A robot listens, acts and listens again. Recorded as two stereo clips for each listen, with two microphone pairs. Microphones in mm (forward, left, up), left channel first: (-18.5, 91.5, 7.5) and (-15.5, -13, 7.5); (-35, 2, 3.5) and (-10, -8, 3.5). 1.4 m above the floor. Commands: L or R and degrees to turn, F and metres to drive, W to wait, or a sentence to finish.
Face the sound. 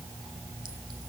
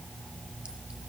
W
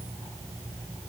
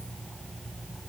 W
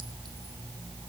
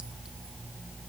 I can't make out anything to turn to.